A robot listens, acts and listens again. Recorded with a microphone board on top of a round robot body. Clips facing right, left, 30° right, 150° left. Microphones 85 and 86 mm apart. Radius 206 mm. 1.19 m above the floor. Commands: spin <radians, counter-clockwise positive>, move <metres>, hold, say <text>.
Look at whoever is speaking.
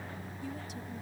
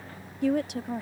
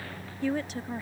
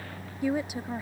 spin 1.31
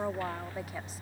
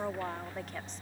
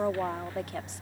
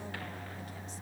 spin -0.17
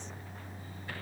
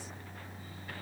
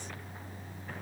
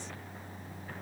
hold
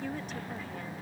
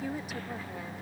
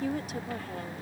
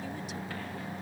spin 0.17
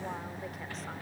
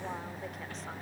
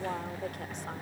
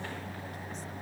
hold
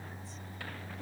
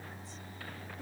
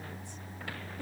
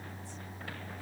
hold
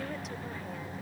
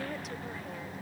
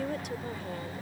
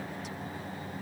say I heard a woman speaking from this way, but can't make it out now.